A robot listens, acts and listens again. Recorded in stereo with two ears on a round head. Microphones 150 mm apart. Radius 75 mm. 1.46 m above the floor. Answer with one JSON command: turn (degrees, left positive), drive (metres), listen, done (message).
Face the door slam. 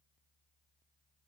{"listen": true}
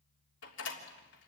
{"turn": 90}
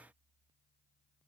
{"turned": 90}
{"done": "Facing where the door slam came from. I can't hear it now."}